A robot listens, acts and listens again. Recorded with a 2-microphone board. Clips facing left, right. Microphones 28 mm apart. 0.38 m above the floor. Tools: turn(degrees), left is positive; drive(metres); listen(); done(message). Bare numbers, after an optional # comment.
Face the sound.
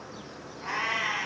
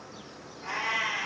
# The cat meowing: about 30° left or 150° left.
turn(30)
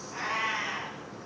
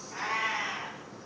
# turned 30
done("Found it: a cat meowing, straight ahead, 2 to 4 m away.")